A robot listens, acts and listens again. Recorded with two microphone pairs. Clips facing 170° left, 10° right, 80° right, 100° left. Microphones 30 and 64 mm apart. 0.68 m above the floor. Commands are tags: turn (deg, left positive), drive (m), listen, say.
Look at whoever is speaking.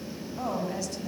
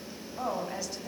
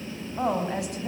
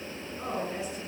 <turn deg="-90"/>
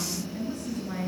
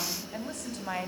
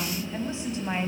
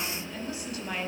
<turn deg="-15"/>
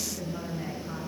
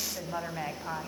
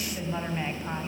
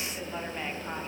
<say>Found it: a woman speaking, straight ahead, over 4 m away.</say>